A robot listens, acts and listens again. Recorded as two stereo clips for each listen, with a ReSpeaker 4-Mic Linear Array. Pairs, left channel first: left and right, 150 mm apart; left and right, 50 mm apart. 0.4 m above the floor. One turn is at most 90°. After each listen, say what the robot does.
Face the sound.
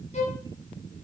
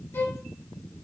Turn 50° left.
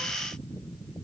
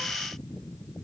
Keep listening.
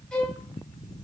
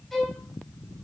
Facing the violin.